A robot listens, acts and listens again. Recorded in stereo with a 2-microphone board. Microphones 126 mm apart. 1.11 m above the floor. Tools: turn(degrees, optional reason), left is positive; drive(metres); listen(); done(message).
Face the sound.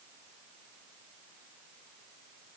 listen()
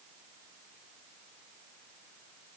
listen()
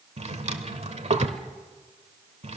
turn(degrees=-60, reason="The drawer: about 60° right or 120° right.")
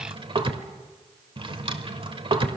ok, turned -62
turn(degrees=-50, reason="So it is at 50° right.")
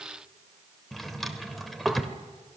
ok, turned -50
done("Found it: a drawer, straight ahead.")